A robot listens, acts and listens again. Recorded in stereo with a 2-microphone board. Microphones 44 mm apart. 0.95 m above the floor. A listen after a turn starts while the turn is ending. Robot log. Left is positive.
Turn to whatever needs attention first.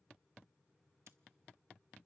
cmd idle
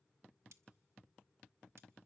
cmd idle
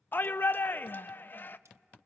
note: The shout: about 45° left or 135° left.
cmd yaw +45
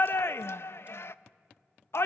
note: So it is at 80° left.
cmd yaw +80
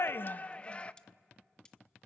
note: The shout is now 30° left.
cmd yaw +30
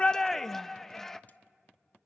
note: The shout is now 10° left.
cmd yaw +10
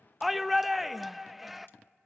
end: Found it: a shout, straight ahead, under 1 m away.